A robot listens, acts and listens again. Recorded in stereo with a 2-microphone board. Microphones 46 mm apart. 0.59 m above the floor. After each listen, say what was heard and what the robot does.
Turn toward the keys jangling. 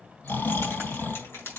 Turn 90° left.
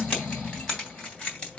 So it is at 25° left. Turn 25° left.
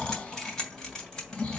The keys jangling is now 15° left. Turn 15° left.
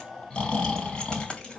The keys jangling is now 15° left. Turn 15° left.
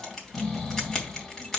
Facing the keys jangling.